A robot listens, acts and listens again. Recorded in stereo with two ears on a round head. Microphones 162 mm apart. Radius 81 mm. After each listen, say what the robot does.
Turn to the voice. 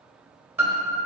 Keep listening.
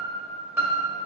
Keep listening.
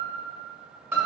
I can't make out anyone speaking to turn to.